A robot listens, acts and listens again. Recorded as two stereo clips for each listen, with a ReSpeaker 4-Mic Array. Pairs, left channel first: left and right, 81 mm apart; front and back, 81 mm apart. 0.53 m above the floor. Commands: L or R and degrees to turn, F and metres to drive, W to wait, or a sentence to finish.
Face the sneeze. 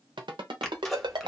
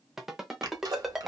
L175
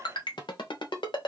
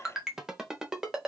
Facing where the sneeze came from. I can't hear it now.